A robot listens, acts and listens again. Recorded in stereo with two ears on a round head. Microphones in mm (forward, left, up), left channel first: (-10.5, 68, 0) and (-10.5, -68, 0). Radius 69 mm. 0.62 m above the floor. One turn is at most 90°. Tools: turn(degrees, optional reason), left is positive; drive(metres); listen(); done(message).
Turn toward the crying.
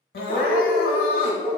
turn(degrees=65, reason="The crying: about 65° left or 115° left.")
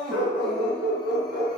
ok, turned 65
done("Found it: crying, straight ahead, under 1 m away.")